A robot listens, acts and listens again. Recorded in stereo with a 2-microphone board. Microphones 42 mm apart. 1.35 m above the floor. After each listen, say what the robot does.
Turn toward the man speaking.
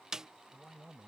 Turn 30° left.
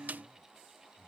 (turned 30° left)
Turn 130° left.
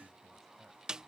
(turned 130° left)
Keep listening.
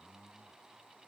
Found it: a man speaking, straight ahead.